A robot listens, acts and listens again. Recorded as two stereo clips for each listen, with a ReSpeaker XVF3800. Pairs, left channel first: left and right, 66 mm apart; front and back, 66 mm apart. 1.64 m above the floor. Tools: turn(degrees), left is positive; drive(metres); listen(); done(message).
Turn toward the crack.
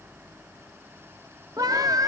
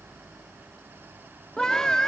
listen()
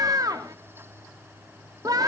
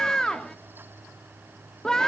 listen()
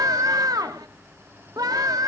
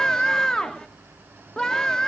done("I can't make out a crack to turn to.")